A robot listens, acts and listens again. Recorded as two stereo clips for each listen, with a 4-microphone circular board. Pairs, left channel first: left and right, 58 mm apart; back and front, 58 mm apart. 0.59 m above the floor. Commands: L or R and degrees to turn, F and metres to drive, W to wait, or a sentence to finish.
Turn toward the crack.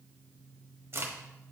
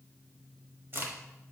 R50
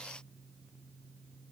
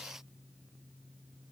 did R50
I heard a crack from this way, but can't make it out now.